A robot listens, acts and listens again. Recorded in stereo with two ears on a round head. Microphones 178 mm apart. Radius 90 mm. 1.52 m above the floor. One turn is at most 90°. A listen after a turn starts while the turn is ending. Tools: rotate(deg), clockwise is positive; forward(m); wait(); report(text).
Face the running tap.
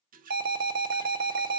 rotate(45)
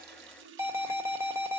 rotate(80)
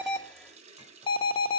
rotate(35)
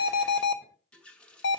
report("Facing the running tap, 1 to 2 m away.")